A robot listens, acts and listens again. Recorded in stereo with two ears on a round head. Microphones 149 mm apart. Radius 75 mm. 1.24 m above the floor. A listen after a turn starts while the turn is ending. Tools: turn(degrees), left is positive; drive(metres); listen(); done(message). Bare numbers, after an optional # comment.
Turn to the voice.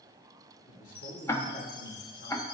# The man speaking: about 50° left or 130° left.
turn(50)
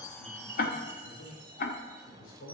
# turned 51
# So it is at 90° left.
turn(90)
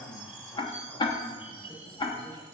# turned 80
# Nothing new. It was at 10° left.
turn(10)
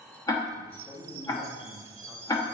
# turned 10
# The man speaking is now 10° left.
turn(10)
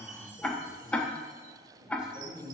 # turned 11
done("Facing the man speaking, over 4 m away.")